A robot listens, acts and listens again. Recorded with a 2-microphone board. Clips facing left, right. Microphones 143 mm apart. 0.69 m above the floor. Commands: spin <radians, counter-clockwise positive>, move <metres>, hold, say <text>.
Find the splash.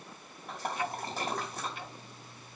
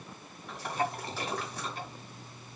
spin 0.79
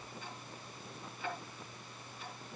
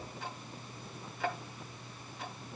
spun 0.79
hold
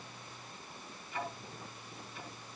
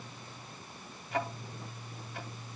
say I heard a splash, but can't make it out now. It was about straight ahead or 90° left.